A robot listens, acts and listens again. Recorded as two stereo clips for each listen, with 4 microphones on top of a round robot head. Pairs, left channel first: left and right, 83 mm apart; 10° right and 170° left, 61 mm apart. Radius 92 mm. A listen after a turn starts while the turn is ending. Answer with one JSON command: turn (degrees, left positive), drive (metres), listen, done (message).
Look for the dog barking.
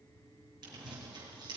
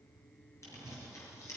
{"listen": true}
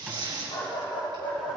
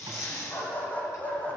{"turn": 60}
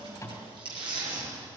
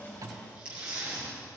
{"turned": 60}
{"listen": true}
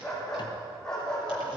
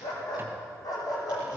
{"turn": 10}
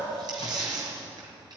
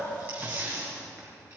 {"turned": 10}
{"listen": true}
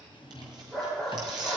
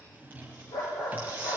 {"done": "Found it: a dog barking, straight ahead."}